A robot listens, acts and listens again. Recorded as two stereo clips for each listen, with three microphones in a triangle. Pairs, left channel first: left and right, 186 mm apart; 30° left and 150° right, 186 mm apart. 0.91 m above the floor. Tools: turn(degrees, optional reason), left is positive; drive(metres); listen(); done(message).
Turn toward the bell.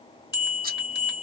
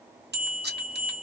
turn(degrees=-170, reason="The bell: 170° right.")
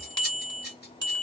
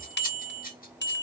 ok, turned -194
turn(degrees=25, reason="The bell is now 25° left.")
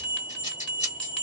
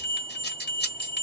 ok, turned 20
done("Facing the bell, 1 to 2 m away.")